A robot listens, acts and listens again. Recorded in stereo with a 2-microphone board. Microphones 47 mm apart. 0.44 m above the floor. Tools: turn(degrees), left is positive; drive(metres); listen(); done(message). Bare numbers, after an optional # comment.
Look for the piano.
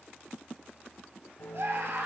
# The piano: about 55° left or 125° left.
turn(55)
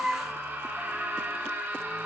listen()
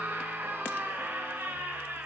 listen()
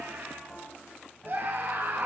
done("Found it: a piano, straight ahead.")